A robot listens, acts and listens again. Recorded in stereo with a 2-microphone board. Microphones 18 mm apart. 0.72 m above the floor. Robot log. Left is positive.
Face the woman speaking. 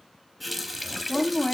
note: The woman speaking: about 35° left or 145° left.
cmd yaw +35
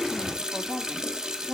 note: So it is at 105° left.
cmd yaw +105
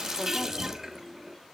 cmd idle
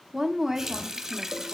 note: The woman speaking is now 15° right.
cmd yaw -15
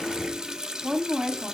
end: Found it: a woman speaking, straight ahead.